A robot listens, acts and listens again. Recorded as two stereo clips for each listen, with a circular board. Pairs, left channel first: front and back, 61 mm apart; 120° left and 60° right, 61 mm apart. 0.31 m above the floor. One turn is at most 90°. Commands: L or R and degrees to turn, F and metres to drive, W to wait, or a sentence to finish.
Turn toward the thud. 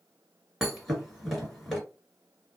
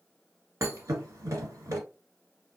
R90
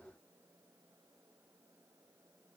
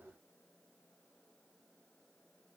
I heard a thud from this way, but can't make it out now.